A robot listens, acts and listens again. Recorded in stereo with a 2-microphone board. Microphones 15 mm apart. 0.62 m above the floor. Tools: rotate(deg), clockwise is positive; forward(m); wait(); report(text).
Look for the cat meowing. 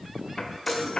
wait()
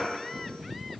wait()
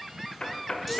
report("I can't make out a cat meowing, only a chime and knocking.")